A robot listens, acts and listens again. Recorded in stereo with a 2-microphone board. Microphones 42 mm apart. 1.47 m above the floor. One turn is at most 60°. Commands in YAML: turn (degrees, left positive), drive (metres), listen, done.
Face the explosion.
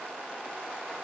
listen: true
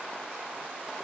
listen: true
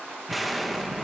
turn: 30
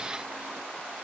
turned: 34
listen: true
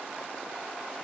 done: "I heard an explosion, but can't make it out now. It was about 35° right or 145° left."